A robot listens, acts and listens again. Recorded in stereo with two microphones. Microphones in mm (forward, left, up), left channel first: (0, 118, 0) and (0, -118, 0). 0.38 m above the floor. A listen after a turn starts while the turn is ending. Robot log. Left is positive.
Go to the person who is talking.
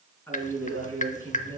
cmd yaw +30
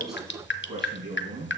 note: So it is at 20° right.
cmd yaw -20
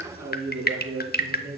cmd fwd 1.0
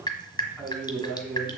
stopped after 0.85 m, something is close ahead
end: Blocked. The man speaking is further on, straight ahead.